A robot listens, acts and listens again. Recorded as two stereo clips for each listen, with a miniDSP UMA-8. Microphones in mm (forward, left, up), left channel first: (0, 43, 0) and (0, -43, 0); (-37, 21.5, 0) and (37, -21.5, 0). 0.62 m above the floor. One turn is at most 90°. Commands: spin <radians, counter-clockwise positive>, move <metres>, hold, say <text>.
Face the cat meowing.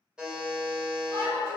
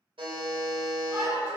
hold
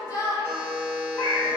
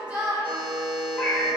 spin 1.13
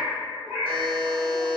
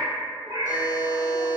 spin -0.26
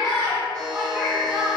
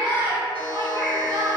spin -0.44
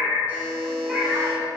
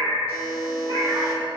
say Facing the cat meowing, 1 to 2 m away.